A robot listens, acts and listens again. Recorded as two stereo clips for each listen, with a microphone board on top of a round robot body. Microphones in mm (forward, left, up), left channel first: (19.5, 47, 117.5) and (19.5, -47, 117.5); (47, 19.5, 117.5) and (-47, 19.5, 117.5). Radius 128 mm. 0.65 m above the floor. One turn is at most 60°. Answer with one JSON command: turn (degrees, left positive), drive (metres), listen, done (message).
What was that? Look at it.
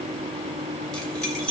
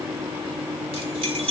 {"turn": 60}
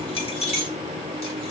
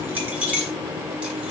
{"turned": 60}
{"turn": 60}
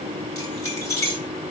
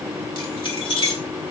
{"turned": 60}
{"turn": 30}
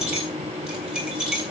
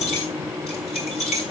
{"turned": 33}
{"turn": -10}
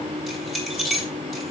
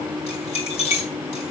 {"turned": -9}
{"done": "Found it: keys jangling, straight ahead."}